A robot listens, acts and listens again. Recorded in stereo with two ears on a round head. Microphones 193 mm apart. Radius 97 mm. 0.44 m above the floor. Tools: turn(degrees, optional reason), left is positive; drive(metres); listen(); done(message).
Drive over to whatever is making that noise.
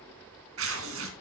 turn(degrees=-65, reason="The tearing paper: about 65° right or 115° right.")
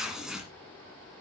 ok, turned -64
drive(metres=1.0)
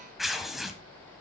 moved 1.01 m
drive(metres=1.0)
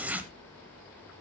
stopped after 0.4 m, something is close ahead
turn(degrees=-10, reason="The tearing paper is now 10° right.")
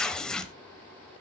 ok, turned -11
done("I am next to the tearing paper.")